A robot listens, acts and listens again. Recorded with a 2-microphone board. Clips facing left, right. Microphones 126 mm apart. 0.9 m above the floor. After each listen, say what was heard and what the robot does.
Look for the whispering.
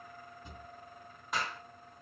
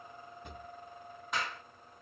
Keep listening.
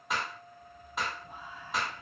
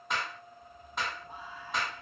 The whispering: about 30° right or 150° right. Turn 30° right.
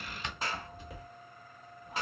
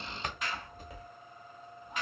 Facing the whispering, 2 to 4 m away.